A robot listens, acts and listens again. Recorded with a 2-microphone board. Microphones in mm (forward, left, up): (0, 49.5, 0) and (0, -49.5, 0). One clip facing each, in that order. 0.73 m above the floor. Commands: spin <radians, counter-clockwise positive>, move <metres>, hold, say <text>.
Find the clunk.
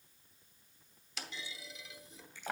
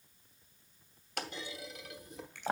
spin -1.05
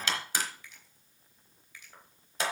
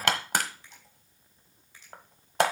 hold
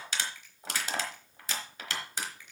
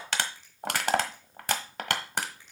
say I heard a clunk, but can't make it out now. It was about straight ahead or 60° right.